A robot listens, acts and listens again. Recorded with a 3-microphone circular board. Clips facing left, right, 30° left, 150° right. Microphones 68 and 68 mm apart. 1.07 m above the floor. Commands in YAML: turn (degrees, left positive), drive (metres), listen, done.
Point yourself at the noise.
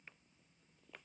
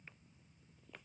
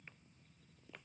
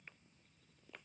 listen: true
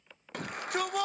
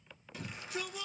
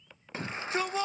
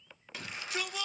turn: 80
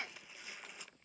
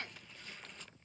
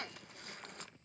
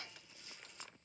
turn: 10
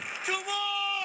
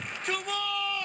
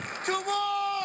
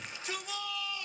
done: "Found it: a shout, straight ahead, under 1 m away."